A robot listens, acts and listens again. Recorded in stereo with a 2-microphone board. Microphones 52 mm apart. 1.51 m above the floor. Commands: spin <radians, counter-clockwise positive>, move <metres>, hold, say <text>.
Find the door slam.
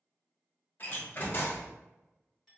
spin 0.70
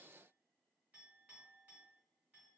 hold
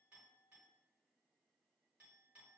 say I heard a door slam, but can't make it out now. It was about straight ahead or 100° left.